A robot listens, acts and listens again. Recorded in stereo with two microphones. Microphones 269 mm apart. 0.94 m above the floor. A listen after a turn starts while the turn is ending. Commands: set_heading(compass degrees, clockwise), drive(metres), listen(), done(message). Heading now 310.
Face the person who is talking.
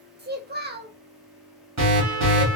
set_heading(345)
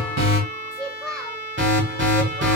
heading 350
done("Found it: a child speaking, straight ahead, under 1 m away.")